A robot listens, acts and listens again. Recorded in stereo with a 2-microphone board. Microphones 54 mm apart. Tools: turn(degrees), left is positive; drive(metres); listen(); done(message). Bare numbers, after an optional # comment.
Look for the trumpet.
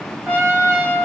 # The trumpet: about 30° right or 150° right.
turn(-30)
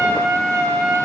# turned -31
# So it is at 120° right.
turn(-120)
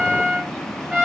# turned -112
done("Facing the trumpet.")